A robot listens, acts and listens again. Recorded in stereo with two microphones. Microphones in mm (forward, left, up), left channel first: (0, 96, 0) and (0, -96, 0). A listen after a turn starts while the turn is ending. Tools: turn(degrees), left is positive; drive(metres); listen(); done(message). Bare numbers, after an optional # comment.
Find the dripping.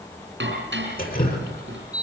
# The dripping: about 50° left or 130° left.
turn(50)
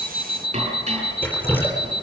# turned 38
# So it is at 10° left.
turn(10)
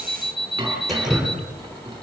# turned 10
done("Facing the dripping, over 4 m away.")